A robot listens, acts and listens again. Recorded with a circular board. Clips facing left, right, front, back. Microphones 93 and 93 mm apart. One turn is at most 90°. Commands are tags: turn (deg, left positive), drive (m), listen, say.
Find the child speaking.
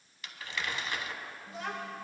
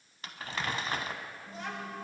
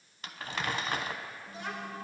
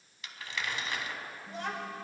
<turn deg="90"/>
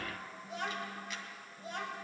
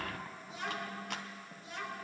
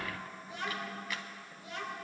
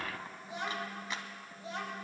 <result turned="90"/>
<turn deg="90"/>
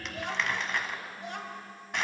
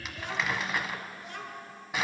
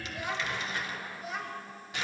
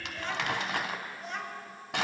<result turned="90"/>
<turn deg="90"/>
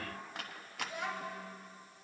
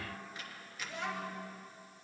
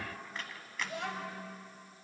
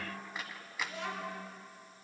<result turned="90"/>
<turn deg="10"/>
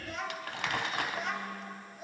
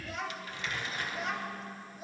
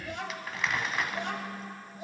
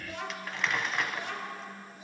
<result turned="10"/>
<say>Found it: a child speaking, straight ahead, 2 to 4 m away.</say>